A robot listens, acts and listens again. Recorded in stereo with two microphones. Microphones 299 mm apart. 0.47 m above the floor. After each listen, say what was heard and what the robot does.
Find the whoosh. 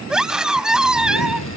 The whoosh: about 65° left or 115° left. Turn 65° left.
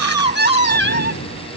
So it is at 55° left. Turn 55° left.
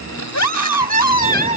Keep listening.
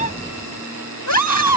Keep listening.
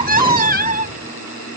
I heard a whoosh from this way, but can't make it out now.